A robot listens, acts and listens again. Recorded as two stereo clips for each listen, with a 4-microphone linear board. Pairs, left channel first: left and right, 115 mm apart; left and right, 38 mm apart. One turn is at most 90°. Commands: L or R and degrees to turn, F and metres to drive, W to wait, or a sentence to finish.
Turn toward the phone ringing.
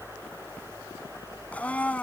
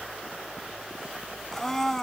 W
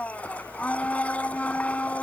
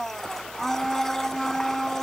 W
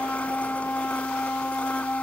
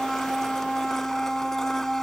I can't make out a phone ringing, only a blender.